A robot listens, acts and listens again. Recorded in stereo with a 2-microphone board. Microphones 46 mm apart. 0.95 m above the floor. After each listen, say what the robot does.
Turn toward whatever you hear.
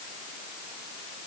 Keep listening.
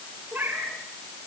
Turn 45° right.
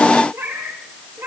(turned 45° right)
Turn 95° right.
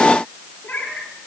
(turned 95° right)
Turn 20° left.
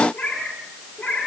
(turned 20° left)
Turn 10° left.
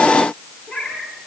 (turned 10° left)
Found it: a cat meowing, straight ahead.